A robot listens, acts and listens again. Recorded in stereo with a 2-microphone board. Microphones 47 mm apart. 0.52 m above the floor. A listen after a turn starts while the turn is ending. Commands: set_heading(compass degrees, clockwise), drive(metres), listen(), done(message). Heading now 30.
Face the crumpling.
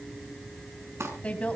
set_heading(90)
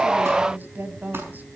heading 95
listen()
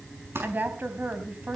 set_heading(145)
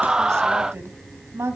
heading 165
set_heading(145)
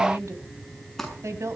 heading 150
done("Facing the crumpling, over 4 m away.")